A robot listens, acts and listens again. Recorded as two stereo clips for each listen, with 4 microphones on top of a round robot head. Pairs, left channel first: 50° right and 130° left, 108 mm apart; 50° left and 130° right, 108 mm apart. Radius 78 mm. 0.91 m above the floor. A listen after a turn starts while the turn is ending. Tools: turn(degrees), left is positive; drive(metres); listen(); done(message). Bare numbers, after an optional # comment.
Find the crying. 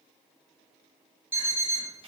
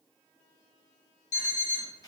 listen()
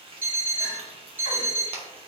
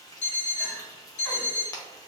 listen()
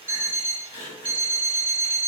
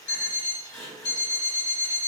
# The crying: 10° right.
turn(-10)
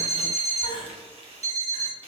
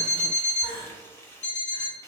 done("Facing the crying.")